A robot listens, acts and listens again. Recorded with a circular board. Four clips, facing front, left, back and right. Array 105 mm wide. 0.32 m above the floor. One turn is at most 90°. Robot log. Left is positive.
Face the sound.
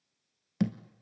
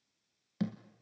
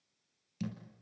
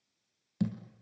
note: The thud: 10° left.
cmd yaw +10
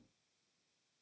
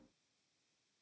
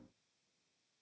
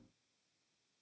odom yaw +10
end: I heard a thud from this way, but can't make it out now.